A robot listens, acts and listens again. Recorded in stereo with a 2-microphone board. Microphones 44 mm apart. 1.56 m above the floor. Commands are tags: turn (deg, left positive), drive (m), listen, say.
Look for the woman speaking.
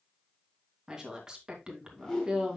<turn deg="-20"/>
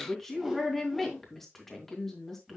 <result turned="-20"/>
<say>Facing the woman speaking.</say>